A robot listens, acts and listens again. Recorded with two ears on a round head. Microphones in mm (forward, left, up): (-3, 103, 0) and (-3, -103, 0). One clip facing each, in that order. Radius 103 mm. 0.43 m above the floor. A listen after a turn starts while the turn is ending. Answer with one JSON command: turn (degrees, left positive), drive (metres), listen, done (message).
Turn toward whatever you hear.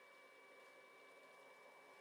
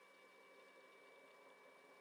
{"listen": true}
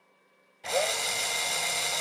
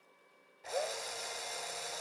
{"turn": 90}
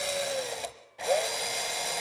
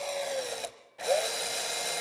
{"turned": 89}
{"done": "Found it: a drill, straight ahead, 1 to 2 m away."}